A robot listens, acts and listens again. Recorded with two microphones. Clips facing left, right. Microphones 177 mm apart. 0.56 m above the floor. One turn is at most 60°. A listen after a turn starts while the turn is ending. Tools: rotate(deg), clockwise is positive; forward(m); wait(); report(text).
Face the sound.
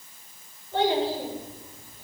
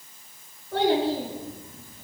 rotate(60)
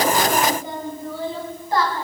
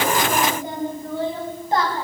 rotate(25)
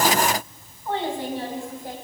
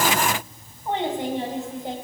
rotate(25)
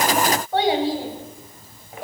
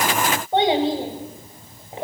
rotate(25)
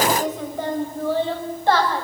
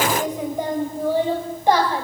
rotate(15)
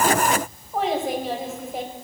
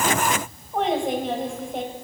report("Facing the child speaking, 2 to 4 m away.")